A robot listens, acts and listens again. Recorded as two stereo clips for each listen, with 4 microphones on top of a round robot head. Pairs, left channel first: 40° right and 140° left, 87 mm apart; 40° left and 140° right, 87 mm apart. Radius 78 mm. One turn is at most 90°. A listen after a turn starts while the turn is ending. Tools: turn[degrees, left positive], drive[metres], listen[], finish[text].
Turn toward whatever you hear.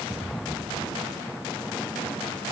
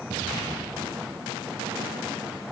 Action: listen[]
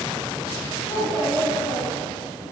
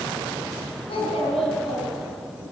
Thought: The child speaking: 30° left.
Action: turn[30]
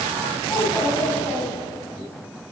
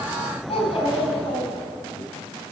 Thought: The child speaking is now 20° left.
Action: turn[20]
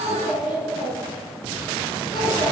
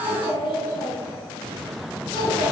Action: finish[Found it: a child speaking, straight ahead, over 4 m away.]